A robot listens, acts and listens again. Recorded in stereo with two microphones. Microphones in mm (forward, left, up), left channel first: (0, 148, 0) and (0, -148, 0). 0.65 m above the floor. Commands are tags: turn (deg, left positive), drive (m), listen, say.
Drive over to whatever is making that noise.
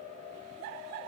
<listen/>
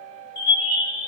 <turn deg="65"/>
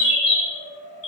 <turn deg="50"/>
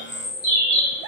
<turn deg="-20"/>
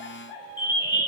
<drive m="1.0"/>
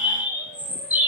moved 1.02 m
<drive m="1.0"/>
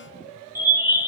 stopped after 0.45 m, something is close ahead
<turn deg="-10"/>
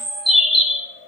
<say>Arrived at the bird, straight ahead.</say>